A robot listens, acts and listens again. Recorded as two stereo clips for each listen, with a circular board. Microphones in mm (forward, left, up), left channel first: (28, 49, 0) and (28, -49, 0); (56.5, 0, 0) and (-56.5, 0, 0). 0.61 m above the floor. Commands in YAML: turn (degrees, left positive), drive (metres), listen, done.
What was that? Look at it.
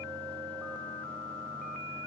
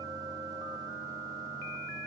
listen: true
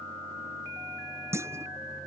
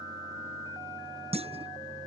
turn: -150
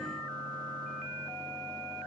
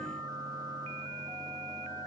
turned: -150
done: "I heard a clunk from this way, but can't make it out now."